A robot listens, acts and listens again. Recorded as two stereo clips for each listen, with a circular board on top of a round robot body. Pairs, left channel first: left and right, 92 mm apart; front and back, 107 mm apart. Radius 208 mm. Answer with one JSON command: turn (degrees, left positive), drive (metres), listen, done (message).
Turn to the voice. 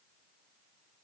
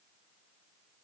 {"listen": true}
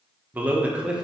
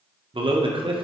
{"turn": -170}
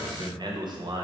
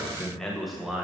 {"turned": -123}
{"turn": -100}
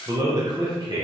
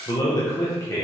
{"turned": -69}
{"turn": -60}
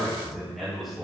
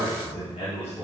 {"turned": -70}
{"done": "Found it: a man speaking, straight ahead, 2 to 4 m away."}